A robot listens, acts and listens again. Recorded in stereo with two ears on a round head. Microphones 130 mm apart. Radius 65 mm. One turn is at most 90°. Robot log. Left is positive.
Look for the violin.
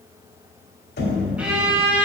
cmd yaw -30
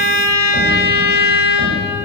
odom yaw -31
note: So it is at 25° left.
cmd yaw +25
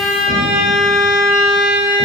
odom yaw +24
end: Found it: a violin, straight ahead, 1 to 2 m away.